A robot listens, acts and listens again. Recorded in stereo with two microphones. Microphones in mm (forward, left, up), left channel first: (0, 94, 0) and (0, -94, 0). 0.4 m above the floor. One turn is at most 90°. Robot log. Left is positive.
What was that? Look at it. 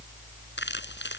note: The crumpling: about 75° left or 105° left.
cmd yaw +75
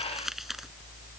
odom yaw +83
end: Found it: crumpling, straight ahead.